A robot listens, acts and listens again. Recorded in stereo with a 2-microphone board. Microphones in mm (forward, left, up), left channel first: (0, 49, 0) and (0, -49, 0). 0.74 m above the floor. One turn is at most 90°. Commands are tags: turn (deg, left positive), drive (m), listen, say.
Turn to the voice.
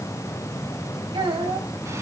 <turn deg="-90"/>
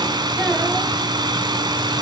<listen/>
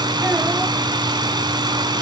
<listen/>
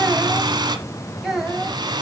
<say>Found it: a child speaking, straight ahead, 2 to 4 m away.</say>